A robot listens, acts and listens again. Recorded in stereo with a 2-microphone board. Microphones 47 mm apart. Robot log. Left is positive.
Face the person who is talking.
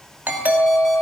cmd idle
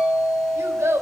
cmd yaw -90
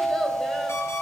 cmd idle
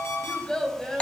note: The child speaking is now 15° left.
cmd yaw +15
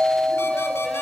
cmd idle
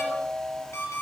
cmd idle
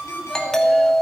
end: Facing where the child speaking came from. I can't hear it now.